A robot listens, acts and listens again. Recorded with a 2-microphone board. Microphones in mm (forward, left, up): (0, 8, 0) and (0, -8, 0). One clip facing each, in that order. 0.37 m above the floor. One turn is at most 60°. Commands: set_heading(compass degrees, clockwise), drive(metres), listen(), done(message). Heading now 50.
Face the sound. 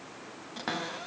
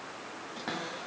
set_heading(35)
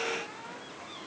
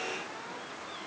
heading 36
listen()
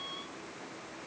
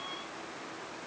listen()
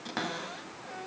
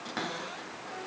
done("Facing the cupboard door, 1 to 2 m away.")